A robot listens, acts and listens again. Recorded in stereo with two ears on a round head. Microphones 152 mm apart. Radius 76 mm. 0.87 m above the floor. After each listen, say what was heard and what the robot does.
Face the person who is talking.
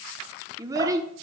The child speaking: about 20° right or 160° right. Turn 20° right.
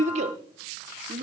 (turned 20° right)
So it is at 140° right. Turn 140° right.
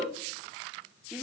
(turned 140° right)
Facing the child speaking, 1 to 2 m away.